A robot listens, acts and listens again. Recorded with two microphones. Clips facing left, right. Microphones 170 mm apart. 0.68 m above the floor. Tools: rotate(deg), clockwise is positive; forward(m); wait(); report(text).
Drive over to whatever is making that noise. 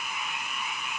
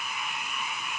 wait()
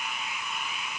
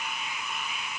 wait()
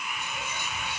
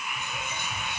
rotate(55)
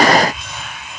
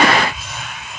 forward(1.0)
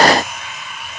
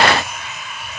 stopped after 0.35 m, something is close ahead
report("Something is in my way. I am facing the whispering but have not reached it.")